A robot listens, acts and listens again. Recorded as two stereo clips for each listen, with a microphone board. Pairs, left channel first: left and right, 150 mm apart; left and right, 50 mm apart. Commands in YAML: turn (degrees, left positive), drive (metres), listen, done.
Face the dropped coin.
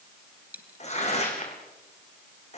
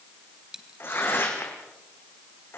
turn: -30
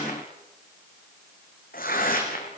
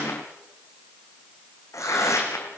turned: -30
listen: true
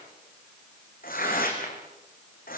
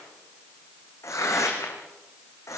done: "I heard a dropped coin, but can't make it out now. It was about 20° left or 140° right."